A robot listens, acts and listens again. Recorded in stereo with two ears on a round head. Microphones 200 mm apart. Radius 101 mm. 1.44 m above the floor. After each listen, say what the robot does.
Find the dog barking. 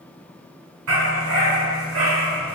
Turn 90° right.
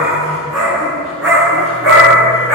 Facing the dog barking.